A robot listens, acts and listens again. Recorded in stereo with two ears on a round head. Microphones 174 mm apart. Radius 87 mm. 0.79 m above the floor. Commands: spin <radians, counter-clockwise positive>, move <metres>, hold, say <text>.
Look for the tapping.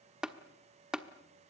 spin -0.52
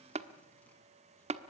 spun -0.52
spin -2.53
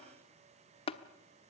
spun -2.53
spin 0.52
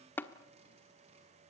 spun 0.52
spin 0.17
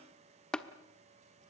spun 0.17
say Found it: tapping, straight ahead, 1 to 2 m away.